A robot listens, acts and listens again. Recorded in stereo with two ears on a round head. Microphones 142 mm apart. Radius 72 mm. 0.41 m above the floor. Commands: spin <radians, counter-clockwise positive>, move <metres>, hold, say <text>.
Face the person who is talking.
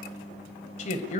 spin 0.79
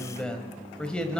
say Facing the man speaking, 1 to 2 m away.